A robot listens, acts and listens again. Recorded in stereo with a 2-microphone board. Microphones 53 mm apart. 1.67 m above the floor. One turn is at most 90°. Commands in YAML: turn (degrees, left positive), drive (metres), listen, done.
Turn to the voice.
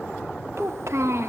turn: -60
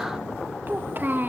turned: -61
turn: -45
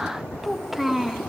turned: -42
done: "Found it: a child speaking, straight ahead."